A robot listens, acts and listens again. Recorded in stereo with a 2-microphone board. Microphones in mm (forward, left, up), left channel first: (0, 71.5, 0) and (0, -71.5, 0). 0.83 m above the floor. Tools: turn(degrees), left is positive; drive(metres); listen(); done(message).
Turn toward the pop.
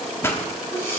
turn(degrees=20)
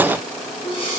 listen()
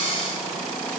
done("I heard a pop, but can't make it out now. It was about straight ahead or 140° left.")